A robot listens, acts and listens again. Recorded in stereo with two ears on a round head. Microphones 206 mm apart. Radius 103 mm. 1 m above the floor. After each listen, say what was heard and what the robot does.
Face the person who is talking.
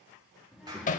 Turn 30° left.
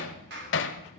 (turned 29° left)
Keep listening.
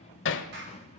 So it is at 155° left. Turn 155° left.
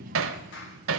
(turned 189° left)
The child speaking is now 35° right. Turn 35° right.
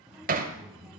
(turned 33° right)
Found it: a child speaking, straight ahead, 1 to 2 m away.